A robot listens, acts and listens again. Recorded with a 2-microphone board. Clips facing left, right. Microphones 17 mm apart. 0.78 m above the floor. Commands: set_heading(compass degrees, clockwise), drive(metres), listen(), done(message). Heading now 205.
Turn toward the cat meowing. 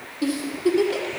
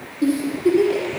listen()
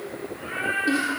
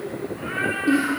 set_heading(255)
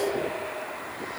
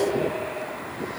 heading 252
listen()
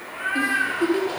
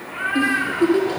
set_heading(317)
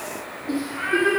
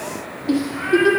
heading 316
set_heading(301)
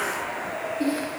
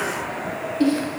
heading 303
listen()
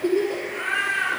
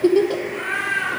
done("Found it: a cat meowing, straight ahead, 2 to 4 m away.")